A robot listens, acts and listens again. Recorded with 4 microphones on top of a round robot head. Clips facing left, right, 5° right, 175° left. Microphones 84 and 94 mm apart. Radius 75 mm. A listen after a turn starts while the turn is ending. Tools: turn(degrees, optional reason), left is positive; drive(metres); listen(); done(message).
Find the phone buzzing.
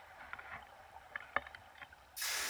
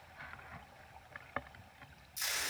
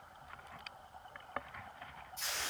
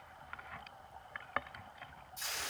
listen()
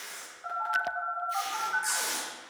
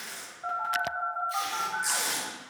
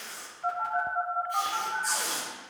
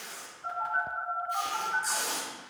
turn(degrees=-50, reason="The phone buzzing: 50° right.")
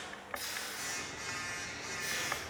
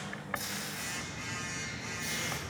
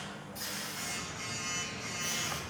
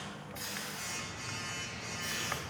turn(degrees=10, reason="The phone buzzing is now 10° left.")
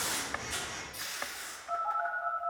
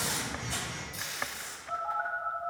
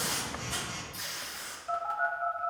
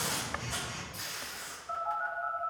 done("Found it: a phone buzzing, straight ahead, 2 to 4 m away.")